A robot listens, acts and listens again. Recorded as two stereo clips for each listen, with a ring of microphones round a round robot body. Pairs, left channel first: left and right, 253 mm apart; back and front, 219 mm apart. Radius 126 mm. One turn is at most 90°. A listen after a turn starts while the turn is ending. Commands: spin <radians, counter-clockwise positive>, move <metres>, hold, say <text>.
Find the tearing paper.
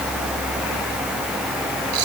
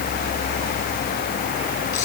hold
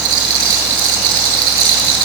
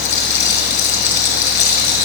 hold
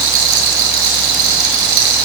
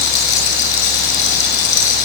say I can't make out tearing paper, only a rattle.